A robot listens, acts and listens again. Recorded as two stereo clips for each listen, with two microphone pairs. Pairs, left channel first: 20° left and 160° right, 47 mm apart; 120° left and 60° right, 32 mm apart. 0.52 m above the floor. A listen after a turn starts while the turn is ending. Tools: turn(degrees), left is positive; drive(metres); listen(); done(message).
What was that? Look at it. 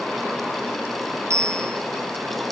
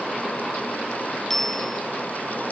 turn(degrees=-155)
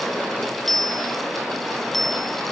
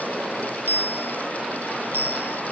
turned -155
turn(degrees=-65)
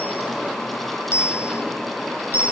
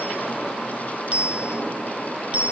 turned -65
turn(degrees=-10)
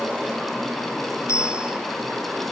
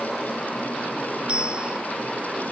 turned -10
done("Found it: a bicycle bell, straight ahead.")